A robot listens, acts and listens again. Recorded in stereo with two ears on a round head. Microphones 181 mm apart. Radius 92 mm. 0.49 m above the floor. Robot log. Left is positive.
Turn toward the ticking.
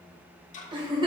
note: The ticking: about 40° left or 140° left.
cmd yaw +40
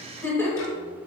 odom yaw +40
cmd idle
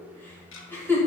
note: So it is at 100° left.
cmd yaw +100
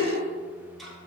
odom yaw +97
end: Found it: ticking, straight ahead.